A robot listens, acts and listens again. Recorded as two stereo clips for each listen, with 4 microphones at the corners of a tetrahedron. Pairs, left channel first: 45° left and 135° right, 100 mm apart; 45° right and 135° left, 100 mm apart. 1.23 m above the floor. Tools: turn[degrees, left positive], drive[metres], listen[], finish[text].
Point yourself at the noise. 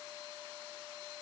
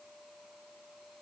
Action: listen[]
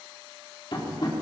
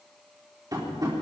Thought: The tapping: 85° left.
Action: turn[85]
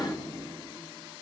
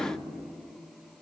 Action: listen[]
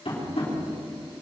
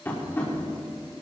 Thought: The tapping is now 25° left.
Action: turn[25]
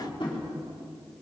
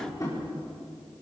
Thought: The tapping is now 10° left.
Action: turn[10]
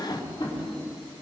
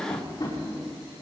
Action: finish[Facing the tapping, over 4 m away.]